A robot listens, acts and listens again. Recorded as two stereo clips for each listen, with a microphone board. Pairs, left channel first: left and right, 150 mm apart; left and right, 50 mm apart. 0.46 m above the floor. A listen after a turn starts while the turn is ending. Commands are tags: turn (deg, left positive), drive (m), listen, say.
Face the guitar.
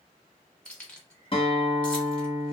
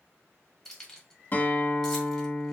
<turn deg="40"/>
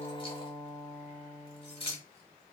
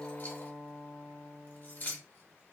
<say>Facing the guitar.</say>